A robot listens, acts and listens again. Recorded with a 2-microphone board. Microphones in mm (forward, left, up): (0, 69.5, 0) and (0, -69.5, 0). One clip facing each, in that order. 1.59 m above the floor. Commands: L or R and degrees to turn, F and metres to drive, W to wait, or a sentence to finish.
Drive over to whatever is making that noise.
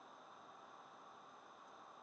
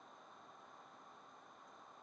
W
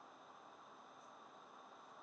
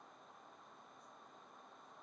W
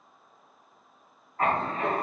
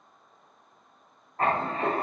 R30
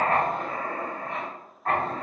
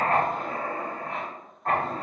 F1.0
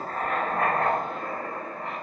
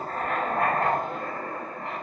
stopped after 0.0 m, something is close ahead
Something is in my way. I am facing the writing but have not reached it.